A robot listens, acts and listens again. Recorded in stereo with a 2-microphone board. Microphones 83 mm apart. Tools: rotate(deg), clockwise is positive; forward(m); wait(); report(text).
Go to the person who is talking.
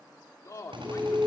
rotate(-40)
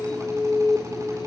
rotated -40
wait()
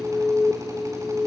wait()
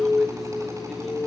report("I heard a man speaking, but can't make it out now. It was about straight ahead or 100° left. I did not reach it.")